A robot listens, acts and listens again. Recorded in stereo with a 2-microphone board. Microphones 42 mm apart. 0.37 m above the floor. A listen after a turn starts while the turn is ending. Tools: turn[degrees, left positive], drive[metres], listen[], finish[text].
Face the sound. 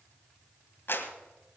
Thought: The clap: about 60° left or 120° left.
Action: turn[60]
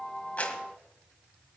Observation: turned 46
Action: listen[]
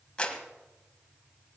Thought: So it is at 25° left.
Action: turn[25]
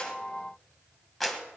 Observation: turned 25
Action: finish[Facing the clap, 1 to 2 m away.]